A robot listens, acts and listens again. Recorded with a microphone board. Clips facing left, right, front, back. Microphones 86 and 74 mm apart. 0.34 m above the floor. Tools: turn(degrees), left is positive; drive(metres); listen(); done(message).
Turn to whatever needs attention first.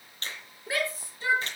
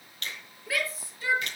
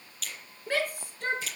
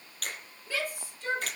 turn(degrees=25)
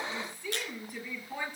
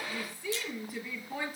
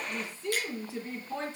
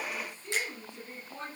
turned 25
done("Found it: a shout, straight ahead, over 4 m away.")